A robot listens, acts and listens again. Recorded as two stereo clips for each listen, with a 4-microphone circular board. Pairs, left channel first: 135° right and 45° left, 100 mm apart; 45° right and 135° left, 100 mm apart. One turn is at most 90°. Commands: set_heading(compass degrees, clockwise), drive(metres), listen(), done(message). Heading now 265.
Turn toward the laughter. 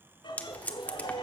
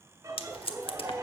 set_heading(355)
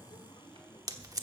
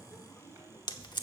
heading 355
set_heading(85)
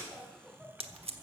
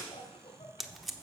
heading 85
set_heading(130)
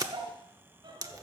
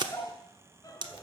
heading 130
set_heading(120)
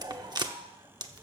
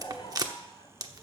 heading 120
done("Facing the laughter, 2 to 4 m away.")